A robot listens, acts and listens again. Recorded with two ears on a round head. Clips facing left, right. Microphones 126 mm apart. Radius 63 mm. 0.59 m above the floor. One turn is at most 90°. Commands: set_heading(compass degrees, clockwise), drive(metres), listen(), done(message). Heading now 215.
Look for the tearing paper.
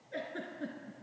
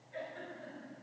listen()
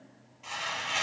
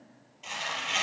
set_heading(245)
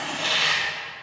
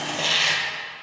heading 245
set_heading(335)
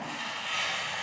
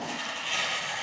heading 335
set_heading(20)
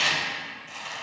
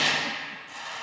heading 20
set_heading(0)
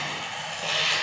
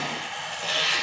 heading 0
done("Facing the tearing paper, 2 to 4 m away.")